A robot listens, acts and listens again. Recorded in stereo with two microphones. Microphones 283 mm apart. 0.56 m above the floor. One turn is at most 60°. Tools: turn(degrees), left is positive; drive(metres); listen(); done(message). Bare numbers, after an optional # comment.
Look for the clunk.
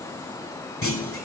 # The clunk: about 50° left or 130° left.
turn(50)
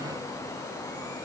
listen()
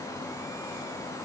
done("I heard a clunk, but can't make it out now. It was about straight ahead or 80° left.")